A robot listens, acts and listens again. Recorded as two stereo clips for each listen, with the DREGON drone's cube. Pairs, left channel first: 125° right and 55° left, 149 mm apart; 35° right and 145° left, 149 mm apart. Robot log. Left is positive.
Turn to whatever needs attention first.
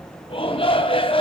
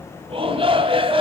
note: The shout: 170° right.
cmd yaw -170
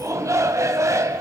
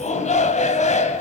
note: The shout is now 10° right.
cmd yaw -10
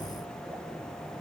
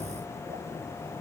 cmd idle
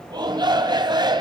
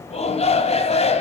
end: Facing the shout, 2 to 4 m away.